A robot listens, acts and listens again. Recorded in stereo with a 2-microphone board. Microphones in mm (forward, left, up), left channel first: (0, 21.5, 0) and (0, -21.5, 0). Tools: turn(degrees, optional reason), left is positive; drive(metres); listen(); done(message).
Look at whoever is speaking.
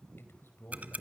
turn(degrees=65, reason="The man speaking: about 65° left or 115° left.")
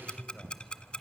listen()
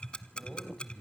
turn(degrees=10, reason="So it is at 10° left.")
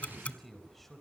done("Facing the man speaking, over 4 m away.")